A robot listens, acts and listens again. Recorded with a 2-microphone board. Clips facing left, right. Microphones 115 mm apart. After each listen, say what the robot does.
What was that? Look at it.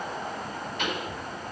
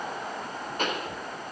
Turn 40° right.
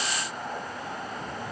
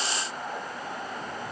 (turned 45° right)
Keep listening.
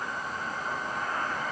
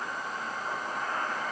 I heard a pop, but can't make it out now. It was about 5° left or 95° right.